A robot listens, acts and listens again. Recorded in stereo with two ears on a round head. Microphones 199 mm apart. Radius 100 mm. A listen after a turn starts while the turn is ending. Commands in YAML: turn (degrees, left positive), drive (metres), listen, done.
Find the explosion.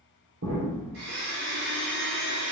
turn: -70
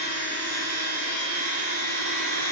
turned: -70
listen: true
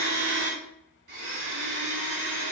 done: "I heard an explosion, but can't make it out now. It was about straight ahead or 40° right."